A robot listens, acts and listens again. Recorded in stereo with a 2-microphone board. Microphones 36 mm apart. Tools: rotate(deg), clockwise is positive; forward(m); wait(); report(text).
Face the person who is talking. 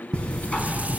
wait()
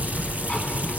wait()
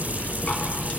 report("I can't make out anyone speaking to turn to.")